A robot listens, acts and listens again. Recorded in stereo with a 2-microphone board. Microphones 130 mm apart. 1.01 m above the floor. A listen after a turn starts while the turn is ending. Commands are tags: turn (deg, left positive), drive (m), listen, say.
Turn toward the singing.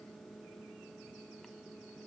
<listen/>
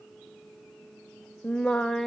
<turn deg="30"/>
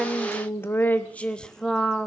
<turn deg="30"/>
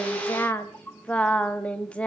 <turn deg="30"/>
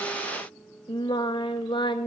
<turn deg="145"/>
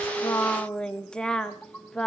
<say>Found it: singing, straight ahead.</say>